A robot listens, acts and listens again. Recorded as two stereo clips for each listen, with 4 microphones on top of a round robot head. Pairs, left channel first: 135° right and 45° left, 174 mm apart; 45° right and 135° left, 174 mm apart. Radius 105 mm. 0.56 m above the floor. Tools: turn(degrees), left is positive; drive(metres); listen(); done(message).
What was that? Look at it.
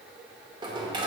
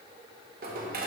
turn(degrees=105)
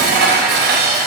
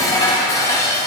turn(degrees=25)
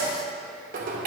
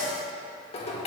turn(degrees=10)
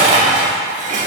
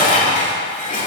done("Facing the dishes clattering.")